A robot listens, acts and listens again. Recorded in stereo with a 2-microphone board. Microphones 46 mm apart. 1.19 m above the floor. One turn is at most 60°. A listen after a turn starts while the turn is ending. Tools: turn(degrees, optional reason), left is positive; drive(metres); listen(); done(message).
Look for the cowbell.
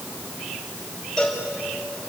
turn(degrees=15, reason="The cowbell: about 15° left or 165° left.")
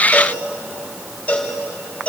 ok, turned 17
turn(degrees=60, reason="So it is at 145° left.")
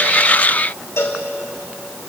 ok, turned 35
turn(degrees=60, reason="The cowbell is now 110° left.")
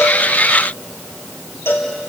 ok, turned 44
turn(degrees=60, reason="The cowbell is now 65° left.")
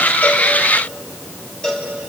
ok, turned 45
turn(degrees=20, reason="The cowbell is now 20° left.")
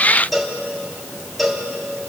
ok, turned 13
done("Found it: a cowbell, straight ahead, 2 to 4 m away.")